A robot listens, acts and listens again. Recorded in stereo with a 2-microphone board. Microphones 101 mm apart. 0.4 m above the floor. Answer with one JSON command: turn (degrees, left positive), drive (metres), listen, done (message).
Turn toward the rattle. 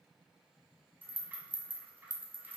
{"turn": -20}
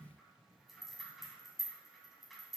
{"done": "Found it: a rattle, straight ahead."}